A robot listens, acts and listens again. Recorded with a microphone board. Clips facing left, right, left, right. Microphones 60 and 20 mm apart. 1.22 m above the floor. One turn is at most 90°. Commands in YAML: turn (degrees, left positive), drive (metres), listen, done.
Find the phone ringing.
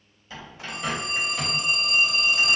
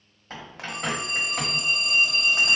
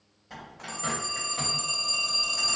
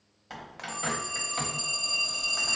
turn: 25
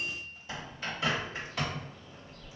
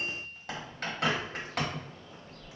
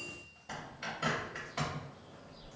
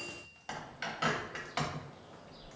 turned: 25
listen: true
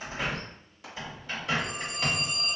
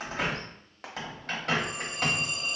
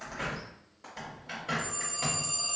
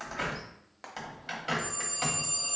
done: "Found it: a phone ringing, straight ahead, 1 to 2 m away."